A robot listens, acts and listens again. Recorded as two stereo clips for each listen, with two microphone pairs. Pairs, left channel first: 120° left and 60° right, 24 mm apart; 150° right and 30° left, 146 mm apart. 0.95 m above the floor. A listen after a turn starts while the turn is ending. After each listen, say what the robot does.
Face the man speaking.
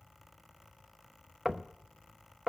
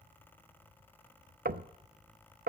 Keep listening.
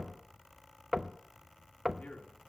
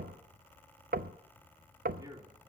Turn 95° left.
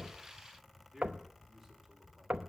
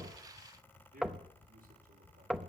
Turn 15° left.
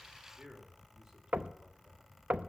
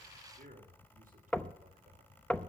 Facing the man speaking.